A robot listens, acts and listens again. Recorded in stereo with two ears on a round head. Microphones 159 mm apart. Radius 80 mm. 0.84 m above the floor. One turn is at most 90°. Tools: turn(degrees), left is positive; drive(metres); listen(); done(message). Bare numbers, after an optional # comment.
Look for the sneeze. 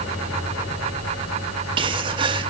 # The sneeze: about 30° right or 150° right.
turn(-30)
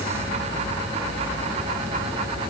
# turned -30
listen()
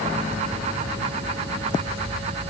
done("I heard a sneeze, but can't make it out now. It was about straight ahead or 120° right.")